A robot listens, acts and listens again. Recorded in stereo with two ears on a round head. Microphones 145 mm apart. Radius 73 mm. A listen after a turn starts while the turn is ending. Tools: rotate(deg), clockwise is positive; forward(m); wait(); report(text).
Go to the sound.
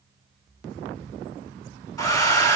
rotate(-25)
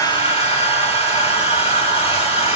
rotate(-125)
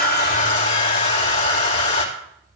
rotate(-40)
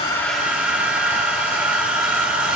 rotate(10)
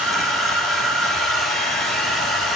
forward(1.0)
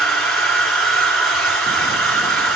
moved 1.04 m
forward(1.0)
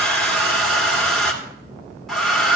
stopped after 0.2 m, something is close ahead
report("Arrived at the hair dryer, straight ahead.")